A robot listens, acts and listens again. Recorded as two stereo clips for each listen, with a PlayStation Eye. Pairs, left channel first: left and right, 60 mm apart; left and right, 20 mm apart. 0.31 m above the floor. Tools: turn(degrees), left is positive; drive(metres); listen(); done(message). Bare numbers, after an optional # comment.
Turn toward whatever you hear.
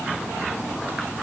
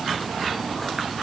listen()
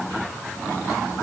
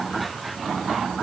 listen()
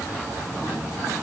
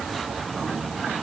done("I can't make out anything to turn to.")